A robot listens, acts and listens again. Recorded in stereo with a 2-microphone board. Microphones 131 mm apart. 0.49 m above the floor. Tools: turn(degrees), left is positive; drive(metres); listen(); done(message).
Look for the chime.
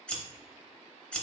listen()
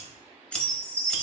turn(degrees=-20)
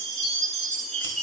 done("Facing the chime, 1 to 2 m away.")